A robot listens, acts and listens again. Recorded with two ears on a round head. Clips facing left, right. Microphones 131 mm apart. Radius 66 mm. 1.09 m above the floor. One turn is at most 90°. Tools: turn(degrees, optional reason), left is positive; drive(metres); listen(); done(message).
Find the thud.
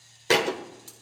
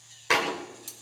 turn(degrees=40, reason="The thud: about 40° left or 140° left.")
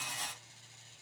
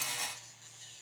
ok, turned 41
listen()
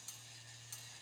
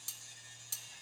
done("I heard a thud, but can't make it out now. It was about straight ahead or 100° left.")